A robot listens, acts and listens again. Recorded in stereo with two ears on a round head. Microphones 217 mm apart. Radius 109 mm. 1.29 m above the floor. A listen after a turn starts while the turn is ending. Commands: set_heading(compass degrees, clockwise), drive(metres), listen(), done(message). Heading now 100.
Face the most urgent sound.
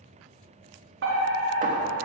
set_heading(155)
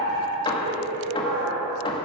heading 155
set_heading(225)
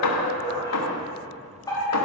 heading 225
set_heading(210)
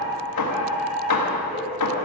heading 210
done("Facing the fire alarm.")